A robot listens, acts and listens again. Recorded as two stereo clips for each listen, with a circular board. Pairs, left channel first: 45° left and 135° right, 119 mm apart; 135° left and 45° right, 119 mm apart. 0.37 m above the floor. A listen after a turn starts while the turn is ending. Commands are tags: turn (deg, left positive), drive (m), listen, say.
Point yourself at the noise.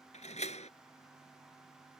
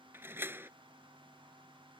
<turn deg="25"/>
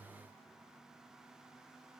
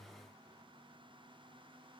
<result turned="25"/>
<say>I heard a door slam from this way, but can't make it out now.</say>